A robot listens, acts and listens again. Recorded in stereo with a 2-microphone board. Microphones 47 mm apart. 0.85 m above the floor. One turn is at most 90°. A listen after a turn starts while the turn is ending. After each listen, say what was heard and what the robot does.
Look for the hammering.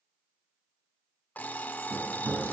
The hammering: about 70° right or 110° right. Turn 70° right.
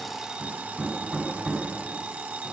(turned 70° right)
Facing the hammering.